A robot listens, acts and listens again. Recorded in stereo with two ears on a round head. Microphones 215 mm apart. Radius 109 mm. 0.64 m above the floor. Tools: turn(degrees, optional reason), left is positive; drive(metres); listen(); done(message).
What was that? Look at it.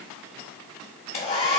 turn(degrees=25, reason="The hair dryer: about 25° left or 155° left.")
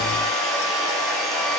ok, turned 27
done("Facing the hair dryer, 1 to 2 m away.")